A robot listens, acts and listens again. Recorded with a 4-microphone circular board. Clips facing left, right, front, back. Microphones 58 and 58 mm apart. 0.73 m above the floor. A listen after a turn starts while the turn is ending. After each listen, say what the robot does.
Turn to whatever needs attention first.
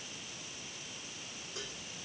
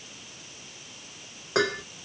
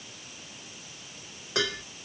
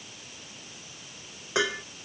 Keep listening.
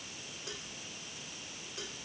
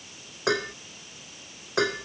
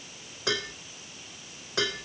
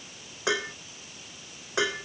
Keep listening.
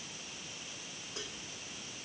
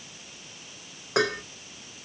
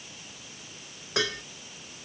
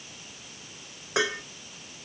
I can't make out anything urgent to turn to.